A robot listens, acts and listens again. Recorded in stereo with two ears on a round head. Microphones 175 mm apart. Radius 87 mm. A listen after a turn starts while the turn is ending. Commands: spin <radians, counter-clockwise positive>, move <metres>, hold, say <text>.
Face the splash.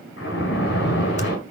spin 1.13
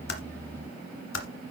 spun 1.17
hold
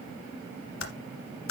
say I heard a splash, but can't make it out now. It was about straight ahead or 45° left.